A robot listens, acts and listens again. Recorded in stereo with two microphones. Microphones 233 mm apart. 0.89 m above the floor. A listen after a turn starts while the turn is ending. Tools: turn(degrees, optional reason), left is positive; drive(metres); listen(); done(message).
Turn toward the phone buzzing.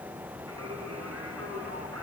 listen()
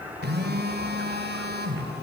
turn(degrees=-45, reason="The phone buzzing: about 45° right or 135° right.")
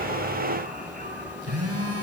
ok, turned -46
turn(degrees=-90, reason="So it is at 90° right.")
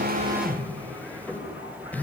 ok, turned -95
done("Found it: a phone buzzing, straight ahead, 2 to 4 m away.")